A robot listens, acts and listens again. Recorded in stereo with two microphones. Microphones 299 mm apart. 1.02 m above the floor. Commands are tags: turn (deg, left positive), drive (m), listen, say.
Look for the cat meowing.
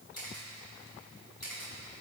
<listen/>
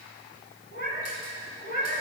<turn deg="30"/>
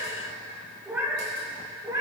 <turn deg="-10"/>
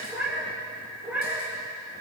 <say>Found it: a cat meowing, straight ahead, 2 to 4 m away.</say>